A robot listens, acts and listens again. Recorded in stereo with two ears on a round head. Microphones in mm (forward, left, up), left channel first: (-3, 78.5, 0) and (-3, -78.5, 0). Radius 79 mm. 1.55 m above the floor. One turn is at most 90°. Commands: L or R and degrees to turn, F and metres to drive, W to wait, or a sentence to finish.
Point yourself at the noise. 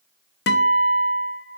L65
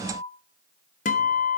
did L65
L45
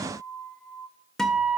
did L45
Found it: a guitar, straight ahead.